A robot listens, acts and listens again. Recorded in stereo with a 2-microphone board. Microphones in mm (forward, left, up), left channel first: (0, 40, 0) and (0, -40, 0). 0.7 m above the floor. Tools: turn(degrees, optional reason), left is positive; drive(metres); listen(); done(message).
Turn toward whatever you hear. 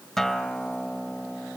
turn(degrees=30)
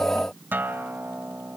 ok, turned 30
turn(degrees=-25, reason="So it is at 25° right.")
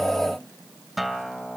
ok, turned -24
done("Found it: a guitar, straight ahead, 1 to 2 m away.")